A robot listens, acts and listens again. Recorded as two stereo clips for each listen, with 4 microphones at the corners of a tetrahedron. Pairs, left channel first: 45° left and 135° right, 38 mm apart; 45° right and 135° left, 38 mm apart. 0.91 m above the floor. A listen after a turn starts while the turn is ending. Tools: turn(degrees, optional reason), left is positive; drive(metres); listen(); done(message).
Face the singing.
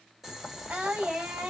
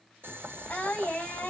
turn(degrees=-95, reason="The singing: 95° right.")
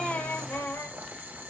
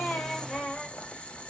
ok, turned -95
turn(degrees=20, reason="The singing is now 20° left.")
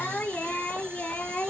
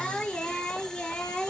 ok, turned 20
done("Facing the singing.")